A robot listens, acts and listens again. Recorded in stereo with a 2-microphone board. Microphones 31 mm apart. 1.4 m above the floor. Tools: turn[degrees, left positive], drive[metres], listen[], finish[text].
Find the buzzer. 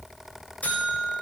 Thought: The buzzer: about 55° left or 125° left.
Action: turn[55]
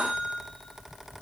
Action: finish[Facing the buzzer, over 4 m away.]